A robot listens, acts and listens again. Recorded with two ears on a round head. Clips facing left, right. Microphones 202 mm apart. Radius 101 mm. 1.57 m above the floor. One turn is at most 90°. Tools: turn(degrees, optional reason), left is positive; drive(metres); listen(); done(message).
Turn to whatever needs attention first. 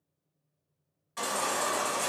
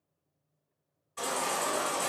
turn(degrees=90)
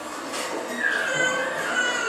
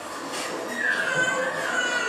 done("Found it: a baby crying, straight ahead, 1 to 2 m away.")